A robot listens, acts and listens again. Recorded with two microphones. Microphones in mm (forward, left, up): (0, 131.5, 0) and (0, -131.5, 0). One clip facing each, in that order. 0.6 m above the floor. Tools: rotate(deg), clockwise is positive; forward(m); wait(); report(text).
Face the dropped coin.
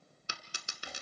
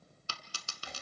rotate(-20)
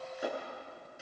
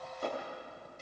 wait()
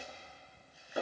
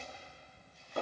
report("I heard a dropped coin, but can't make it out now. It was about straight ahead or 140° left.")